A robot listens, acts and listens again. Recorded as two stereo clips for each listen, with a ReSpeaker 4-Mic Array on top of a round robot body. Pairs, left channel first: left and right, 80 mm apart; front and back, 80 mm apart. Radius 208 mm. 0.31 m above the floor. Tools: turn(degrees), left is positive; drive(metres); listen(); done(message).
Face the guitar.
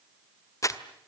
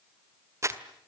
listen()
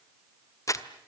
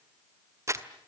listen()
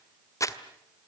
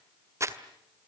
done("I can't make out a guitar to turn to.")